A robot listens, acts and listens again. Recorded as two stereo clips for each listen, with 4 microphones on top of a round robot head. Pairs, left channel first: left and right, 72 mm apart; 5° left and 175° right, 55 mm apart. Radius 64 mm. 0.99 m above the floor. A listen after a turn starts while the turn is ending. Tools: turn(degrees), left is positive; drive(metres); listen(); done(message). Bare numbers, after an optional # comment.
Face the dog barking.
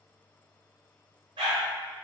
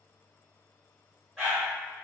# The dog barking: 85° right.
turn(-85)
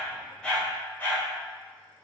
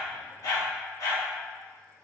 # The dog barking is now 30° left.
turn(30)
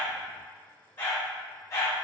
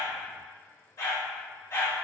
# The dog barking is now 45° left.
turn(45)
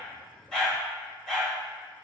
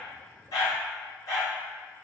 done("Found it: a dog barking, straight ahead.")